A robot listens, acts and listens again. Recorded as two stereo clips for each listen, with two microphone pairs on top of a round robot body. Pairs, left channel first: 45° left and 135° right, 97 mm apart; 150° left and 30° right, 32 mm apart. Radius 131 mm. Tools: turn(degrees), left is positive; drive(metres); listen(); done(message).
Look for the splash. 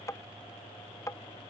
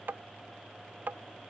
listen()
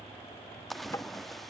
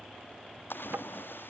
turn(degrees=135)
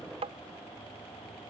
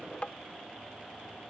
done("I heard a splash from this way, but can't make it out now.")